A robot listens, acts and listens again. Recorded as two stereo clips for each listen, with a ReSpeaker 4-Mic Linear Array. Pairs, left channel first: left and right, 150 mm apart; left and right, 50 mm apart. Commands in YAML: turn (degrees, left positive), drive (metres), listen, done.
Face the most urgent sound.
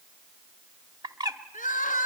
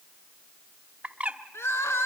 turn: 65
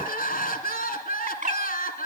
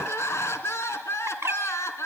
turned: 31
turn: 80
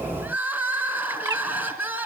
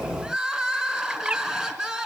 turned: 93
turn: -10
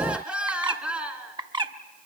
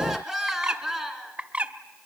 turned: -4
done: "Found it: crying, straight ahead, 2 to 4 m away."